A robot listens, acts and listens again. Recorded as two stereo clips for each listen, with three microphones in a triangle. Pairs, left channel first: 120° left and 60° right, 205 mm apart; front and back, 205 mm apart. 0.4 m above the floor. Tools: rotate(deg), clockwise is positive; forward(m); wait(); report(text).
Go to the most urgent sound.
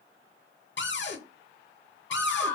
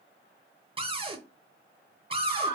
rotate(-40)
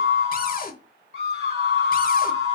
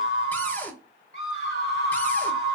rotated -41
forward(1.0)
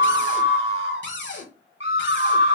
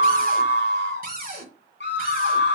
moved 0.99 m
rotate(10)
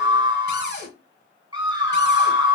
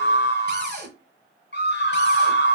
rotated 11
forward(1.0)
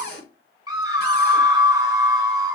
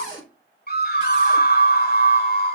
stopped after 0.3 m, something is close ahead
report("I am next to the scream.")